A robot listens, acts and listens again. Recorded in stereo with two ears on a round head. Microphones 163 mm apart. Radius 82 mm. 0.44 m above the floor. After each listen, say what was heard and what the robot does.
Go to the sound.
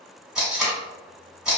Turn 30° right.
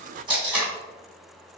So it is at 150° right. Turn 150° right.
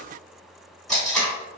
Drive 1.0 m forward.
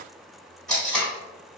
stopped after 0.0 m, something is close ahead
Blocked. The tape being pulled is further on, straight ahead.